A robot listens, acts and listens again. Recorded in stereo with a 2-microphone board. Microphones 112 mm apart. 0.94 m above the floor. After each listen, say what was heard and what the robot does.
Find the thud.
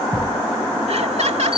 The thud: about 30° left or 150° left. Turn 30° left.
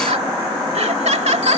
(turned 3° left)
Keep listening.
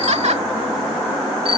I heard a thud, but can't make it out now. It was about 25° left or 150° left.